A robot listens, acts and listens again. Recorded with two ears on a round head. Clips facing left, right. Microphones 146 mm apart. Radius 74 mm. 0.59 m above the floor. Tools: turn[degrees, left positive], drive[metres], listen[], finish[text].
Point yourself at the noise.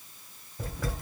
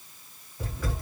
Action: turn[90]
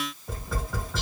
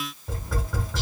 Action: finish[Facing the tapping, 2 to 4 m away.]